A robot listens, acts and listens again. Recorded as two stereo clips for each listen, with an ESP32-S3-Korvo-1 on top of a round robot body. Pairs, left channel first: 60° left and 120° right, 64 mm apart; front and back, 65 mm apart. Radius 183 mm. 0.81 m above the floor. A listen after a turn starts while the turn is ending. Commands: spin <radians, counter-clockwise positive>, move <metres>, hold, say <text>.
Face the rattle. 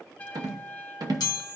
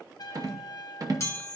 spin -2.53
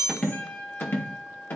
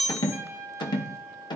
say Found it: a rattle, straight ahead.